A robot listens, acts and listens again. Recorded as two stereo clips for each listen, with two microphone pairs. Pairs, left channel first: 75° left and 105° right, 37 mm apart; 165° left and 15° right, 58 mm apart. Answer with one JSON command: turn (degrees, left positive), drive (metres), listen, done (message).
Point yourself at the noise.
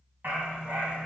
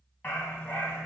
{"turn": -125}
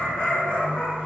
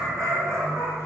{"turn": 25}
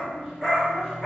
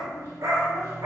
{"done": "Facing the dog barking."}